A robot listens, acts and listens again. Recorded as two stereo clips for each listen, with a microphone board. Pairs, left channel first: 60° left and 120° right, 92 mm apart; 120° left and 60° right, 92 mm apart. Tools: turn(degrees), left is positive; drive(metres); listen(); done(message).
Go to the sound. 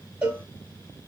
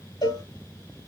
turn(degrees=165)
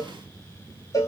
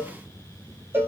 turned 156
drive(metres=1.0)
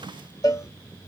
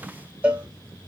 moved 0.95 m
turn(degrees=15)
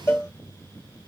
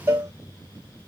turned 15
drive(metres=1.0)
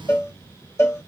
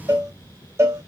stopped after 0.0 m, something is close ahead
done("Arrived at the cowbell, straight ahead.")